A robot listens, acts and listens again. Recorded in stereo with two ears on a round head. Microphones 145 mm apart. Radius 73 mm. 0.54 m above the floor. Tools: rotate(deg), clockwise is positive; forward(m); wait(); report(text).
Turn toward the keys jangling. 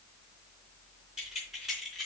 rotate(-30)
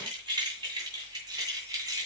rotate(20)
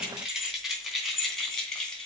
report("Found it: keys jangling, straight ahead, 2 to 4 m away.")